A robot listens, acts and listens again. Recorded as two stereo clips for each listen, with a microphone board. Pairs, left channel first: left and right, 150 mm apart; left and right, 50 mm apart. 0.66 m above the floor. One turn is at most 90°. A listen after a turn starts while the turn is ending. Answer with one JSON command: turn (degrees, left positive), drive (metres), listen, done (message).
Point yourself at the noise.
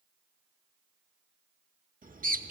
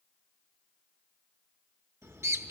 {"turn": -90}
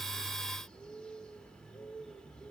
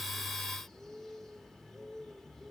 {"done": "Found it: a bird, straight ahead."}